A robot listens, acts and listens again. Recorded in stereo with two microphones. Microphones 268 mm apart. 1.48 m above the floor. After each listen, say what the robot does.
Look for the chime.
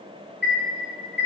Turn 40° left.
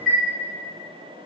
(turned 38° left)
Found it: a chime, straight ahead.